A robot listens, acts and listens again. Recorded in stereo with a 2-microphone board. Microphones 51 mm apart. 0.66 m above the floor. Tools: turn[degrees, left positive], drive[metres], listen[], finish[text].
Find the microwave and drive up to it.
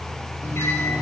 Thought: The microwave: about 65° left or 115° left.
Action: turn[65]
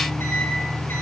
Thought: So it is at 50° left.
Action: turn[50]
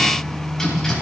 Thought: The microwave is now 10° left.
Action: turn[10]
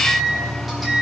Action: drive[1.0]
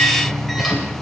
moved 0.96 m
Action: drive[1.0]
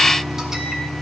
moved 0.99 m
Thought: The microwave is now 10° right.
Action: turn[-10]
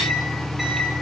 Action: drive[1.0]
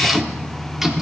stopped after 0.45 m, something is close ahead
Thought: The microwave is now 10° right.
Action: turn[-10]
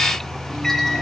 Action: finish[I am next to the microwave.]